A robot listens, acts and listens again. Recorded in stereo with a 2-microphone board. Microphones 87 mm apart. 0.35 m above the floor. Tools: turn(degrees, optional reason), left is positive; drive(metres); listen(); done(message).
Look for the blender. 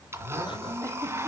turn(degrees=-30, reason="The blender: about 30° right or 150° right.")
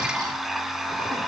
done("Facing the blender.")